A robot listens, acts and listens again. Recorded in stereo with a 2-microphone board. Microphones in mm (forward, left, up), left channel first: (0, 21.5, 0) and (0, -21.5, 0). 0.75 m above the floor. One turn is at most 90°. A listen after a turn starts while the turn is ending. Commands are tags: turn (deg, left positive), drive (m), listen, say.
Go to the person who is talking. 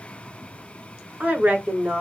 <turn deg="-45"/>
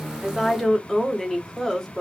<drive m="1.0"/>
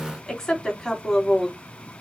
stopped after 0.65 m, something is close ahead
<say>Blocked. The woman speaking is further on, straight ahead.</say>